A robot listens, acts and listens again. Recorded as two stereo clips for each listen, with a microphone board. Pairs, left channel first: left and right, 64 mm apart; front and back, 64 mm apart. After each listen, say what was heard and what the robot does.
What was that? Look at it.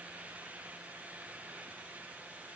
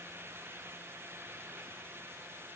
Keep listening.
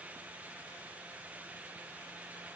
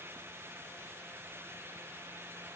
Keep listening.
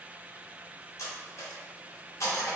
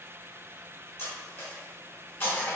The cutlery clinking: 50° left. Turn 50° left.
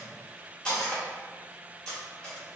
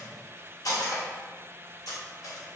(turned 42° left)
The cutlery clinking is now 10° left. Turn 10° left.
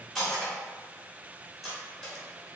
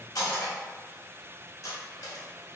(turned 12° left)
Facing the cutlery clinking.